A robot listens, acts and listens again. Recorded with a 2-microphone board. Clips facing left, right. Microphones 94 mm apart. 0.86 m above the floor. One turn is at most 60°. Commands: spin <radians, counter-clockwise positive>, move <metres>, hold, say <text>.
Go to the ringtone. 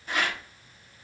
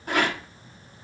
hold
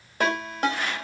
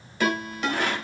spin 0.79
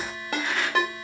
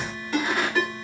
spin 1.05
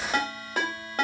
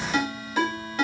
spin 0.79
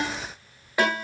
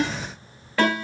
spin 0.26
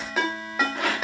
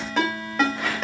move 1.0
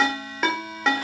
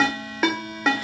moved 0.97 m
move 1.0
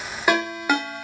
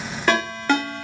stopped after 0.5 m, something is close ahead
spin 0.17
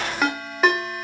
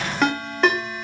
say Arrived at the ringtone, straight ahead.